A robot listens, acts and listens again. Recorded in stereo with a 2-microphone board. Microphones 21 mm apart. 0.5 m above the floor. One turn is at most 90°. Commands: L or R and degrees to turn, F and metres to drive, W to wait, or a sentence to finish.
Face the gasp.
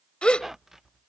L55
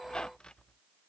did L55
W
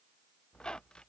I heard a gasp, but can't make it out now. It was about straight ahead or 70° left.